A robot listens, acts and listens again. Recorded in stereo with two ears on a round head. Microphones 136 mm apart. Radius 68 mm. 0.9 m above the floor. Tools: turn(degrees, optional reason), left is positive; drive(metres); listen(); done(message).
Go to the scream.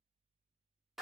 listen()
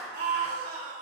turn(degrees=-65, reason="The scream: about 65° right or 115° right.")
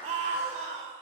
turn(degrees=-45, reason="So it is at 45° right.")
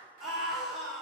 drive(metres=1.0)
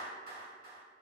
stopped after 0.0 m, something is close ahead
listen()
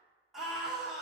done("Something is in my way. I am facing the scream but have not reached it.")